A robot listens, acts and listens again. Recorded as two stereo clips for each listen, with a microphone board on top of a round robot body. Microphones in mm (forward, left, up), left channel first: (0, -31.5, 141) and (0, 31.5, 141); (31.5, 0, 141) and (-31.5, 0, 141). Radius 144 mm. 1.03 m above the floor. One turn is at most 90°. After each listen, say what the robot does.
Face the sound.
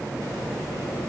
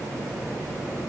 Keep listening.
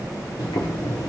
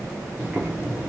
Turn 90° right.
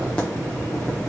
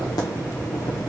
Turn 20° right.
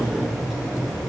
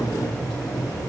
Found it: boiling, straight ahead.